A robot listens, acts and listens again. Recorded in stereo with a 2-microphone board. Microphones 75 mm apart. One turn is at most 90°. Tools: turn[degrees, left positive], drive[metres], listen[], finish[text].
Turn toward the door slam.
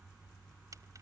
Action: listen[]
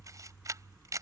Action: listen[]
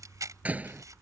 Thought: The door slam: about 20° right or 160° right.
Action: turn[-20]
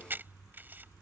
Action: listen[]
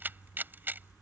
Action: finish[I heard a door slam, but can't make it out now. It was about straight ahead or 140° right.]